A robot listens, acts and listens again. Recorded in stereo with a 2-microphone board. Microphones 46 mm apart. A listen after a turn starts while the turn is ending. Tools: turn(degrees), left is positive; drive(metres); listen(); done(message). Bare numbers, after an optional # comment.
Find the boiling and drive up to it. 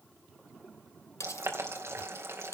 # The boiling: about 60° right or 120° right.
turn(-60)
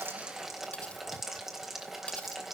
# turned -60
drive(1.0)
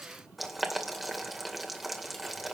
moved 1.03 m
drive(1.0)
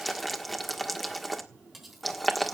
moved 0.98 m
drive(1.0)
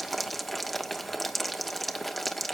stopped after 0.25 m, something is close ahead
done("I am next to the boiling.")